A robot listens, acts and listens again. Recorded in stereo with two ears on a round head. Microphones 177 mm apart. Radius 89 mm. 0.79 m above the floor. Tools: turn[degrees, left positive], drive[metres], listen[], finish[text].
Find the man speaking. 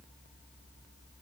Action: listen[]
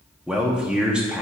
Action: turn[-30]
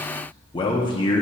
Thought: So it is at 25° left.
Action: turn[25]
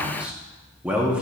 Action: finish[Facing the man speaking.]